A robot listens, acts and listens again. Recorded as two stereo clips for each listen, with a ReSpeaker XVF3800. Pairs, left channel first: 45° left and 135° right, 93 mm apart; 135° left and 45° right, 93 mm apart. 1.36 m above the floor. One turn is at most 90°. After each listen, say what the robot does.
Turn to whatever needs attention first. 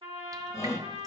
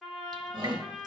Turn 10° right.
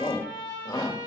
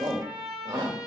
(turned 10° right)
Facing the shout.